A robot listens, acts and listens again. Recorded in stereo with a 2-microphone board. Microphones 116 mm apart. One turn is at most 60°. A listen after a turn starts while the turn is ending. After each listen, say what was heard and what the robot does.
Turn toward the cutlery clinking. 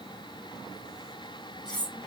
The cutlery clinking: about 40° left or 140° left. Turn 40° left.
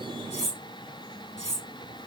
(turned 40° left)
So it is at 95° left. Turn 60° left.
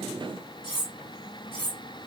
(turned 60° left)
The cutlery clinking is now 40° left. Turn 40° left.
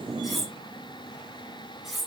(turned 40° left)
Found it: cutlery clinking, straight ahead, 1 to 2 m away.